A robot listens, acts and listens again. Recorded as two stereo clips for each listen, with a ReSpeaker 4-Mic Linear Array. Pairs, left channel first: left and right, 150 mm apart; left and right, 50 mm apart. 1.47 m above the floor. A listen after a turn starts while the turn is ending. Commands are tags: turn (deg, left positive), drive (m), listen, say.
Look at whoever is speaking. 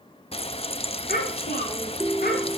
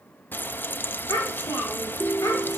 <turn deg="90"/>
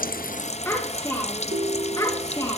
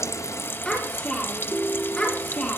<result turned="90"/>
<turn deg="25"/>
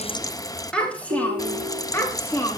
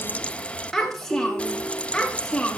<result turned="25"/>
<turn deg="15"/>
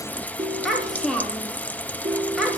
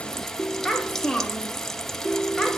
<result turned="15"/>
<say>Facing the child speaking, 2 to 4 m away.</say>